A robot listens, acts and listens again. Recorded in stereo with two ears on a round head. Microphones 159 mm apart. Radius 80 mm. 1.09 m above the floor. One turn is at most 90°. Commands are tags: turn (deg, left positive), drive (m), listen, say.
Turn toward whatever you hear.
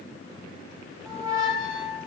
<turn deg="-20"/>
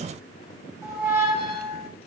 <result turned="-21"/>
<say>Found it: a squeak, straight ahead, 2 to 4 m away.</say>